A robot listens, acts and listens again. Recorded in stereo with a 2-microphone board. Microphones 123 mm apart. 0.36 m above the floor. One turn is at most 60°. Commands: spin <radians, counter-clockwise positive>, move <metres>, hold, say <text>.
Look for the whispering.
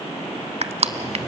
hold
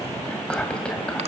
spin 0.52
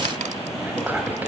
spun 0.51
spin -0.26
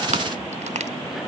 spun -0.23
hold
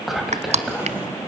say Facing the whispering, 2 to 4 m away.